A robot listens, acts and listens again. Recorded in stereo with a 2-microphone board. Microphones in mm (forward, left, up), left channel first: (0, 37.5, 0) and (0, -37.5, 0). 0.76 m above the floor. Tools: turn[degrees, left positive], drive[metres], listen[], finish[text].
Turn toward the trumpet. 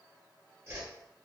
Action: listen[]
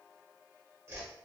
Action: listen[]
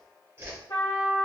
Thought: The trumpet: about 50° left or 130° left.
Action: turn[50]
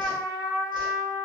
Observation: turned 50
Thought: So it is at 80° left.
Action: turn[80]
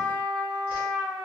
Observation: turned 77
Action: finish[Found it: a trumpet, straight ahead, 1 to 2 m away.]